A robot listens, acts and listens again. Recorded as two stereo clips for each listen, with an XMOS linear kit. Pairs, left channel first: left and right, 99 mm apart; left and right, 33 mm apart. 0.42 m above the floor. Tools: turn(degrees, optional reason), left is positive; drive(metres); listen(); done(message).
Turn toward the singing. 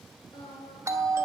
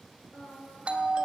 turn(degrees=45, reason="The singing: about 45° left or 135° left.")
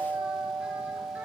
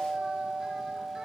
listen()
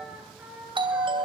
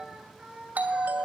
turn(degrees=-20, reason="So it is at 20° right.")
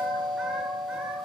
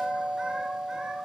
listen()
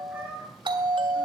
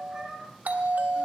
turn(degrees=-15, reason="The singing is now 15° right.")
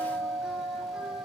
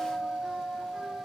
listen()
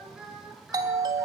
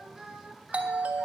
done("Found it: singing, straight ahead.")